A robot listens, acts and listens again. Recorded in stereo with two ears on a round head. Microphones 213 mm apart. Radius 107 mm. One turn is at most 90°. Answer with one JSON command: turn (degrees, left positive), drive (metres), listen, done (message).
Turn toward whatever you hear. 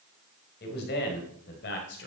{"turn": 50}
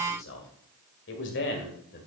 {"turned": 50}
{"turn": 45}
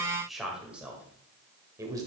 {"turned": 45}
{"turn": -15}
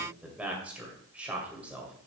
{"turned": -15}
{"done": "Facing the man speaking, 2 to 4 m away."}